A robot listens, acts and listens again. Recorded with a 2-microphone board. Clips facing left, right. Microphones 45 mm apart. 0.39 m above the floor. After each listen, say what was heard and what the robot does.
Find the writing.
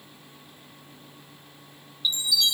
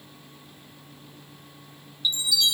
Keep listening.
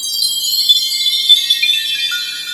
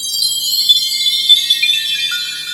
Keep listening.
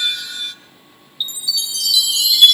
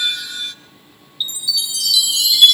I can't make out writing to turn to.